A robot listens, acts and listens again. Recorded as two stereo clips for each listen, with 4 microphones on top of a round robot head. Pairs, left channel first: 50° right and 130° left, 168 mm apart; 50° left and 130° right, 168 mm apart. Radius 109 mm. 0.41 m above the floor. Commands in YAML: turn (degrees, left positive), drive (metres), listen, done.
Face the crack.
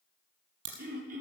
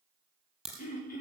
turn: 140
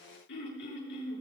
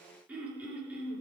done: "Facing where the crack came from. I can't hear it now."